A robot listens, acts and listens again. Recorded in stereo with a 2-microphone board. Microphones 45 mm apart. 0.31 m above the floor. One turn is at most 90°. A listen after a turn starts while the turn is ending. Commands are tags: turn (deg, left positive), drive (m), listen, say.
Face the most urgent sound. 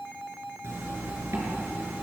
<listen/>
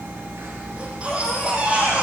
<turn deg="-30"/>
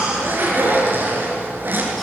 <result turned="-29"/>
<listen/>
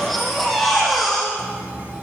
<say>Found it: a baby crying, straight ahead, over 4 m away.</say>